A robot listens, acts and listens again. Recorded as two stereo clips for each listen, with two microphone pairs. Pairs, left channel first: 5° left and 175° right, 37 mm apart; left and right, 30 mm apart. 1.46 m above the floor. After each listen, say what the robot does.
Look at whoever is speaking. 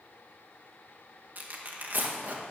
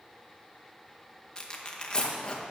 Keep listening.
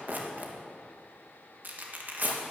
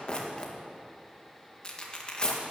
Keep listening.
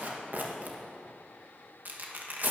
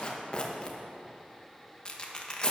I can't make out anyone speaking, only tearing paper.